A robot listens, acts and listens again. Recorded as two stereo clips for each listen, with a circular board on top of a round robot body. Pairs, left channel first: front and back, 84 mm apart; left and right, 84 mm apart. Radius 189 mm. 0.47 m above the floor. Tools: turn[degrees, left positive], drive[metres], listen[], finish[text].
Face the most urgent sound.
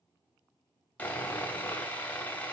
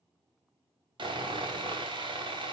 Action: listen[]
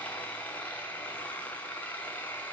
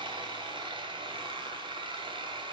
Action: listen[]
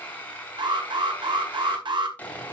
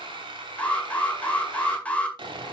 Thought: The alarm: 165° left.
Action: turn[165]
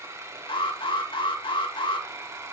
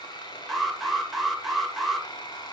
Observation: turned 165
Action: finish[Facing the alarm.]